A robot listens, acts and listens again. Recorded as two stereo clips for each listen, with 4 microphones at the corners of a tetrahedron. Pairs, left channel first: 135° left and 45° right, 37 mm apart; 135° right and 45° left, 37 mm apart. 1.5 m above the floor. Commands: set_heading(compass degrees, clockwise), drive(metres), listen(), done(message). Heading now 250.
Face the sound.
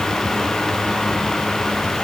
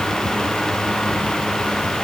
listen()
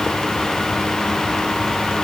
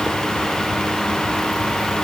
listen()
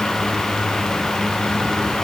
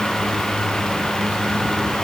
done("I can't make out anything to turn to.")